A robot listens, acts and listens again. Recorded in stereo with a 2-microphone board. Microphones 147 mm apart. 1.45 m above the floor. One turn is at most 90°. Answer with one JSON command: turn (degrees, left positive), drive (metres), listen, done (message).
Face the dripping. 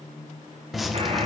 {"turn": 30}
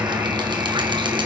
{"turn": -30}
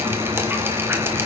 {"turn": -15}
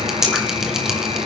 {"done": "Found it: dripping, straight ahead, 1 to 2 m away."}